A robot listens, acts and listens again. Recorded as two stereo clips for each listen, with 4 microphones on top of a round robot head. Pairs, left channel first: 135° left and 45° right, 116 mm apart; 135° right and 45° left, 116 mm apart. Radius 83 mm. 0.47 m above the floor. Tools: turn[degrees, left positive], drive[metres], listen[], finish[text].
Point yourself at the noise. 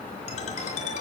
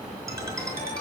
Thought: The ringtone: 110° left.
Action: turn[110]
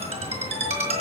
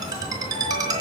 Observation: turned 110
Thought: The ringtone is now 15° right.
Action: turn[-15]
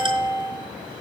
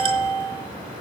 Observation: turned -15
Action: finish[Found it: a ringtone, straight ahead.]